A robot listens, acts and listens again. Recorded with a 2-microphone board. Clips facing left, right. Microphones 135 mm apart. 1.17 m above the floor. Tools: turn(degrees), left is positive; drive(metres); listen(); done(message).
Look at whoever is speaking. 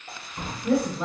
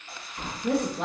turn(degrees=-65)
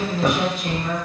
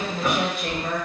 turn(degrees=-50)
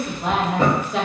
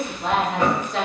done("Facing the woman speaking, under 1 m away.")